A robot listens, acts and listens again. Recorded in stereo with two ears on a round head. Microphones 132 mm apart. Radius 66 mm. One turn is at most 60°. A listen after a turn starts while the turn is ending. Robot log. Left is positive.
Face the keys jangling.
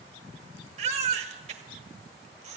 cmd idle
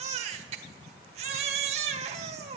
cmd idle
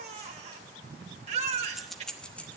cmd yaw +30
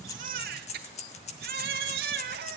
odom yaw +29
note: So it is at 135° left.
cmd yaw +60
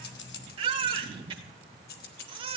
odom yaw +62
note: The keys jangling is now 70° left.
cmd yaw +60
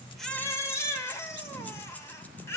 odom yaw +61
note: Nothing new. It was at 10° left.
cmd yaw +10
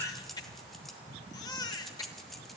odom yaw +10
end: Facing the keys jangling, 1 to 2 m away.